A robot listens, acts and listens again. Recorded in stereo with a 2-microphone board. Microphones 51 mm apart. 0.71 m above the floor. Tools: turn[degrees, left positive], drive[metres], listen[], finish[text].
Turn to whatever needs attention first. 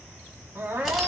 Thought: The crying: about 50° right or 130° right.
Action: turn[-50]
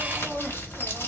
Action: listen[]
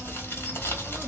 Action: listen[]
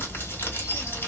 Action: finish[I heard crying, but can't make it out now. It was about straight ahead or 80° right.]